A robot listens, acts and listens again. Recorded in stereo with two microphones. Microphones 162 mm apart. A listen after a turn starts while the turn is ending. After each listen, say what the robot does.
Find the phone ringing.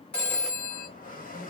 Turn 30° left.
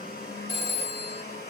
Turn 140° left.
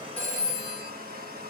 Turn 20° right.
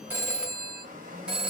Found it: a phone ringing, straight ahead.